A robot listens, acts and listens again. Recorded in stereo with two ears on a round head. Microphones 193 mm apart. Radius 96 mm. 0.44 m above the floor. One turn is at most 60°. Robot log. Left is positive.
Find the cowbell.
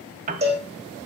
note: The cowbell: about 30° right or 150° right.
cmd yaw -30
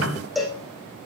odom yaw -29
end: Found it: a cowbell, straight ahead, over 4 m away.